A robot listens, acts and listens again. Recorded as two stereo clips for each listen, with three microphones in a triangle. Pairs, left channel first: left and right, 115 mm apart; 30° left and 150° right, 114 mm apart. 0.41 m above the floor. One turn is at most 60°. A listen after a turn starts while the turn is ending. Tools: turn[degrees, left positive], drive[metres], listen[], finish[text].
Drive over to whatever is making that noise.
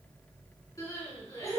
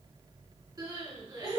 Thought: The crying: 150° left.
Action: turn[60]
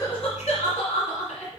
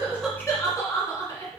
Thought: The crying is now 90° left.
Action: turn[60]
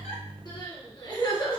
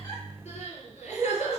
Thought: The crying is now 35° left.
Action: turn[35]
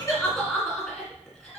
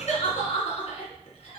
Action: drive[1.0]
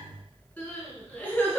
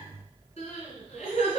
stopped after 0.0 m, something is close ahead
Thought: The crying is now 15° left.
Action: turn[15]
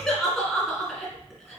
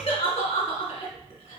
Action: finish[Something is in my way. I am facing the crying but have not reached it.]